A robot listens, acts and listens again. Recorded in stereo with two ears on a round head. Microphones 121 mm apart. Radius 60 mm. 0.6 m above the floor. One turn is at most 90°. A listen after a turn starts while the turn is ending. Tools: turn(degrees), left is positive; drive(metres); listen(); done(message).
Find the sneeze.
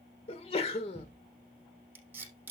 turn(degrees=45)
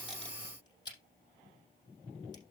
listen()
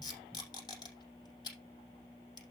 done("I heard a sneeze, but can't make it out now. It was about straight ahead or 90° left.")